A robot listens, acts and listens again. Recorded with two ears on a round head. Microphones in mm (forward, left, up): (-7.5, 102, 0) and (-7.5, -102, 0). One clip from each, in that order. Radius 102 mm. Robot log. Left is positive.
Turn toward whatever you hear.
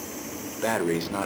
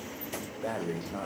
note: The breathing: about 65° left or 115° left.
cmd yaw +65
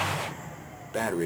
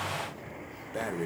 note: So it is at 20° left.
cmd yaw +20
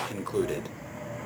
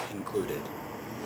end: Facing the breathing, under 1 m away.